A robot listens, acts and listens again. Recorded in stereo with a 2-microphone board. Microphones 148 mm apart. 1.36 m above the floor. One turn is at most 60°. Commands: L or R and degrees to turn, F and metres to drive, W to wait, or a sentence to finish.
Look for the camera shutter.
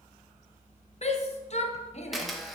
L30
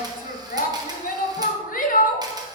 W
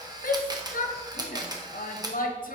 R30
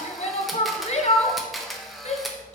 Facing the camera shutter.